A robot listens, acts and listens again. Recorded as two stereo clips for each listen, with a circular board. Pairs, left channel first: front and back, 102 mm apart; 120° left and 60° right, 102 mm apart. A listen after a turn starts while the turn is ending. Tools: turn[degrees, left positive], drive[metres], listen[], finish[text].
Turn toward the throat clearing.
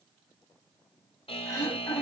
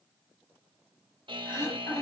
Thought: The throat clearing: 55° left.
Action: turn[55]
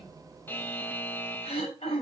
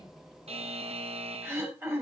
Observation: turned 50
Thought: The throat clearing is now 10° left.
Action: turn[10]
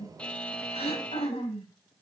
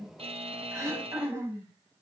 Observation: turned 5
Action: finish[Facing the throat clearing.]